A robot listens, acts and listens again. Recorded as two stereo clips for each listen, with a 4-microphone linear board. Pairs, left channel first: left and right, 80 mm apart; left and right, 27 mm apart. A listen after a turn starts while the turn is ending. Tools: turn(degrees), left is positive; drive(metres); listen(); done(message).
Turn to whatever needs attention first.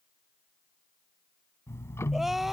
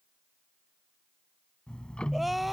turn(degrees=-30)
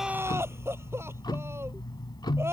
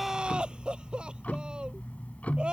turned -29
turn(degrees=-145)
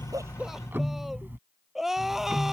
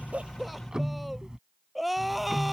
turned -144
done("Facing the crying.")